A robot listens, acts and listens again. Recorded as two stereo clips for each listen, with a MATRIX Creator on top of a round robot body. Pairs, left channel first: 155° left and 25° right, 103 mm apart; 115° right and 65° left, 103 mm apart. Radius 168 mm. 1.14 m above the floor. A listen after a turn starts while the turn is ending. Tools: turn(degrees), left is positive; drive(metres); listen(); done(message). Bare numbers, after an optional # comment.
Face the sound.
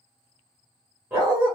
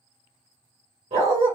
# The dog barking: 45° left.
turn(45)
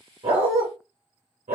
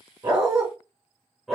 # The dog barking is now 20° right.
turn(-20)
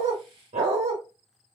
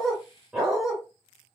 # The dog barking is now 20° right.
turn(-20)
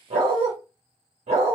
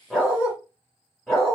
# The dog barking is now 30° right.
turn(-30)
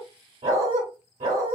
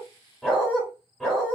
# The dog barking is now 25° right.
turn(-25)
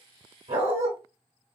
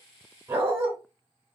# The dog barking is now 10° left.
turn(10)
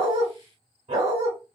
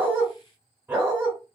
done("Facing the dog barking, 1 to 2 m away.")